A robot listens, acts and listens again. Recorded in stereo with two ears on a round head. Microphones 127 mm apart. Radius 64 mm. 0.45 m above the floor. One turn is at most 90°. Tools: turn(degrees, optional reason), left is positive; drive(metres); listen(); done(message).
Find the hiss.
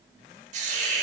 turn(degrees=-55, reason="The hiss: about 55° right or 125° right.")
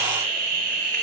turn(degrees=-70, reason="So it is at 70° right.")
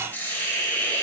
turn(degrees=15, reason="The hiss is now 15° left.")
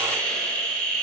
done("Found it: a hiss, straight ahead, under 1 m away.")